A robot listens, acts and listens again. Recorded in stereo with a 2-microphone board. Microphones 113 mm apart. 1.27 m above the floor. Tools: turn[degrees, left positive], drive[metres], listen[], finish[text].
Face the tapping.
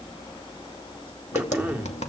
Action: turn[90]
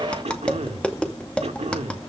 Thought: So it is at 10° left.
Action: turn[10]
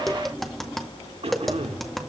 Action: finish[Found it: tapping, straight ahead.]